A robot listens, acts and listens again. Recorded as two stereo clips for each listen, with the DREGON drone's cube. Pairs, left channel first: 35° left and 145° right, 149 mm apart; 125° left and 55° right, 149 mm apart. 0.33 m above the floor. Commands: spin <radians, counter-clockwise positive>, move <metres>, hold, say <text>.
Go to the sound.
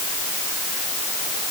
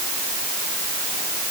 hold
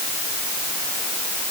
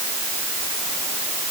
hold
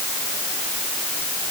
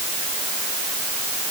say I can't make out anything to turn to.